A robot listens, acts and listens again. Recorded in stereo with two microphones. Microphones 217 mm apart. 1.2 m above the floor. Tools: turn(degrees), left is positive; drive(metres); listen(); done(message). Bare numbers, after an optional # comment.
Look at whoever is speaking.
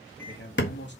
# The man speaking: about 50° left or 130° left.
turn(50)
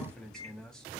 done("Found it: a man speaking, straight ahead.")